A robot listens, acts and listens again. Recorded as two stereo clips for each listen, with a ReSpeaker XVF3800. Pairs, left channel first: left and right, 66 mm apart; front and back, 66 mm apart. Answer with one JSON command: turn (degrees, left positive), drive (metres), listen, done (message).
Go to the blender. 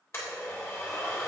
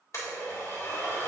{"turn": 40}
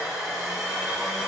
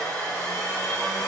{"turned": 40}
{"turn": -10}
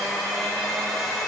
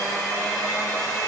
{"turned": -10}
{"drive": 1.0}
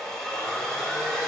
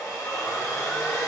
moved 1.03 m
{"turn": 10}
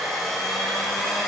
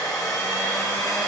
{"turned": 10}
{"drive": 1.0}
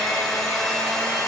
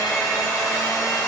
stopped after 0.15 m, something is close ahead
{"done": "Arrived at the blender, straight ahead."}